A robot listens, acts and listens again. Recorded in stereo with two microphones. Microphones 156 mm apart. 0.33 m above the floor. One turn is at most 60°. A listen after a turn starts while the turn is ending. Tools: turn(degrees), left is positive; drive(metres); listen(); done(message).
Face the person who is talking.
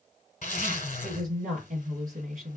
turn(degrees=-60)
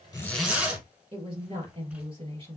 turn(degrees=-45)
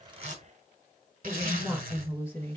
turn(degrees=15)
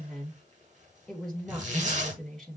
done("Facing the woman speaking.")